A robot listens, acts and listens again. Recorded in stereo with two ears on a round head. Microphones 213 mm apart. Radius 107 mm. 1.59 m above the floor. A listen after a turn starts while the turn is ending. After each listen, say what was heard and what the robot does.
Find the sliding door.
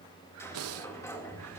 Turn 30° left.
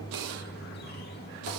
So it is at 130° left. Turn 130° left.
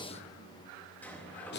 The sliding door is now 10° left. Turn 10° left.
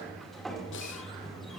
Facing the sliding door.